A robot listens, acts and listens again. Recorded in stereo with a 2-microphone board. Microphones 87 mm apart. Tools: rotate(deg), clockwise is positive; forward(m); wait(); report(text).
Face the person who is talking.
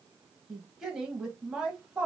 rotate(30)
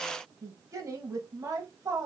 rotate(135)
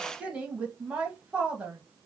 rotate(15)
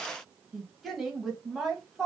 report("Facing the woman speaking, 1 to 2 m away.")